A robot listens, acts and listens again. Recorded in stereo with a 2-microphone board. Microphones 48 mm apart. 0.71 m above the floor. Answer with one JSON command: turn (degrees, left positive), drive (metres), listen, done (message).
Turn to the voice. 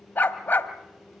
{"listen": true}
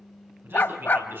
{"turn": -50}
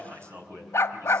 {"turn": -75}
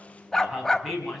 {"done": "Found it: a man speaking, straight ahead, over 4 m away."}